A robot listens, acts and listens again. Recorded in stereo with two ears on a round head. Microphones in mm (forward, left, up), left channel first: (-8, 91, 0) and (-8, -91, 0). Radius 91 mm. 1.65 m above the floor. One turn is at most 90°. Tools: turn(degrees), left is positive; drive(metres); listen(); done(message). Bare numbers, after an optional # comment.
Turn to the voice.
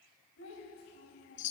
# The child speaking: about 70° left or 110° left.
turn(70)
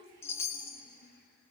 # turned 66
# So it is at 45° left.
turn(45)
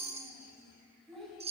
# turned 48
done("Facing the child speaking, over 4 m away.")